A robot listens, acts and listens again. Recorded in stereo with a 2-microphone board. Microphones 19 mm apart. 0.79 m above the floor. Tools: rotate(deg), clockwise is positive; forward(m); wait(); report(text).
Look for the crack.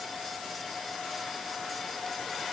wait()
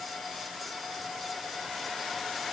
wait()
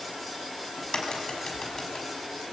rotate(-30)
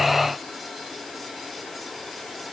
wait()
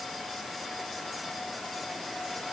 report("I heard a crack, but can't make it out now. It was about straight ahead or 120° left.")